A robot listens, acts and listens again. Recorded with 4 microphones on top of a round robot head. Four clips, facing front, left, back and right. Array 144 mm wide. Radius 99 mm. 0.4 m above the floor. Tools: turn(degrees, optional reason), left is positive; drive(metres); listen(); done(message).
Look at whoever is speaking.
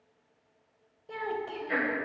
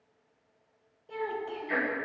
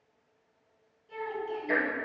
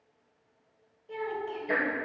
done("Found it: a child speaking, straight ahead.")